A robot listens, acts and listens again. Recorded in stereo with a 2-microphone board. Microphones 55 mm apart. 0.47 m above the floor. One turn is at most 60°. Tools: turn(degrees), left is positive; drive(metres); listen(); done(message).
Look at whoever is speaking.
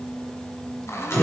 listen()
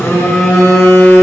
listen()
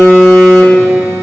done("I can't make out anyone speaking to turn to.")